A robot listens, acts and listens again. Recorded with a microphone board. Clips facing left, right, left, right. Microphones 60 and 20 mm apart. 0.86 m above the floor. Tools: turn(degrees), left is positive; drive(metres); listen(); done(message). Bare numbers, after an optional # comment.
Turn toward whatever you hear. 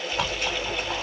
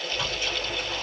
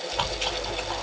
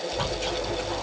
# The chewing: about 65° left or 115° left.
turn(65)
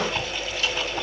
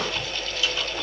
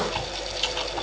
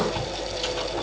# So it is at 45° left.
turn(45)
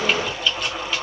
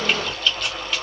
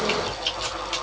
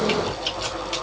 done("Facing the chewing.")